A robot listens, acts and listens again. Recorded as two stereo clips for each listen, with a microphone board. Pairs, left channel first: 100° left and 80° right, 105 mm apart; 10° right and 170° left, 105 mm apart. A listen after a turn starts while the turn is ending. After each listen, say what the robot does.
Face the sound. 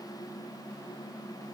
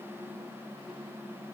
Keep listening.
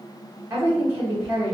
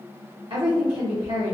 Turn 145° right.
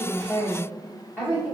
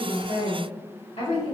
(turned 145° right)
Found it: a woman speaking, straight ahead, 1 to 2 m away.